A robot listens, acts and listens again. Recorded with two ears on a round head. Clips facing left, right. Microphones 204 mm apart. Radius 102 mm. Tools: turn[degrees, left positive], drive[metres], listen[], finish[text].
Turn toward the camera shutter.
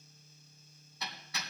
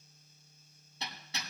Action: listen[]
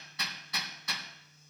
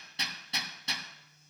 Action: listen[]
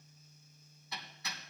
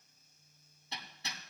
Action: finish[I can't make out a camera shutter to turn to.]